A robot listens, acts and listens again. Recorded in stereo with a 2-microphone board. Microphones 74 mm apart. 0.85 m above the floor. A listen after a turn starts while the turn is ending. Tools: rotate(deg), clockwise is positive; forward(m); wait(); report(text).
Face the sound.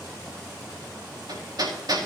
rotate(65)
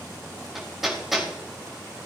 report("Facing the hammering, over 4 m away.")